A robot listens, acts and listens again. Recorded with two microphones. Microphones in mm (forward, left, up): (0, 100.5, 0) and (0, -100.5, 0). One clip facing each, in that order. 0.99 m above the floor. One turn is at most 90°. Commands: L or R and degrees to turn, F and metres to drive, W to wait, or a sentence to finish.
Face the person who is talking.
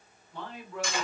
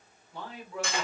R30
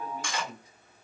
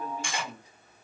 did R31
R90
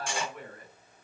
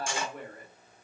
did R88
R50
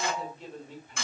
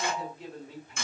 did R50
Facing the man speaking.